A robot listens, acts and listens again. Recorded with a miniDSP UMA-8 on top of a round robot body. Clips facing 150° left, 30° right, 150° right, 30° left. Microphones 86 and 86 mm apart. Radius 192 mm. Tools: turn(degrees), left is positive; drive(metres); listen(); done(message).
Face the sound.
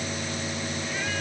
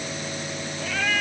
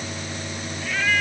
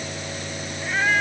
turn(degrees=-35)
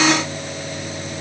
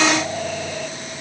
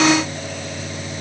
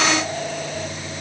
listen()
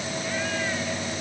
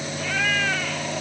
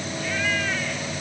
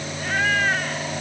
turn(degrees=-20)
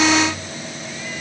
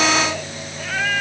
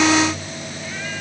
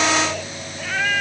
done("Found it: a cat meowing, straight ahead.")